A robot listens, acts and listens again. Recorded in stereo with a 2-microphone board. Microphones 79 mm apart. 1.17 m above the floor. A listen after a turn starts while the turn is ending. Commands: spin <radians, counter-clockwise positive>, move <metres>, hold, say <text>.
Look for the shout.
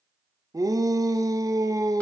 spin -0.87
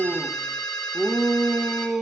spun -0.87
say Facing the shout.